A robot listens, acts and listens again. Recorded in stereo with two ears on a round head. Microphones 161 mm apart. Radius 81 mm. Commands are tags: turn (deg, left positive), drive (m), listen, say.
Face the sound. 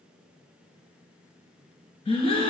<turn deg="30"/>
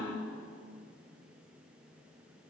<turn deg="115"/>
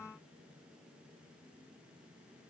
<say>I heard a gasp from this way, but can't make it out now.</say>